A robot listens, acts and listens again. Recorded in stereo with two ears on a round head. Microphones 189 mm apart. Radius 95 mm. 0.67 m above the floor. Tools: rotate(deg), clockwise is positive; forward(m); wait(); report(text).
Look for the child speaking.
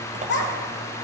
rotate(-60)
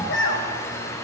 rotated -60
rotate(-65)
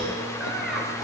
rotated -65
wait()
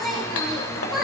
report("Facing the child speaking.")